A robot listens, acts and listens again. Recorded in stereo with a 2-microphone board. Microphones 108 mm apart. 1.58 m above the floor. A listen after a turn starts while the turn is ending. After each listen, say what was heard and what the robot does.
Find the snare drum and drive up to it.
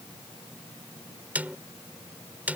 Turn 30° right.
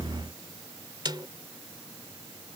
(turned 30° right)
So it is at 135° right. Turn 135° right.
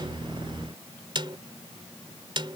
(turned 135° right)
The snare drum is now 55° right. Turn 55° right.
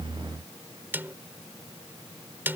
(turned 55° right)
The snare drum is now 20° right. Turn 20° right.
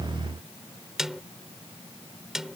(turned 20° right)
Drive 1.0 m forward.
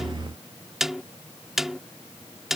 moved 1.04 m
Drive 1.0 m forward.
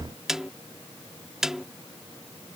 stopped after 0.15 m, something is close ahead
Arrived at the snare drum, straight ahead.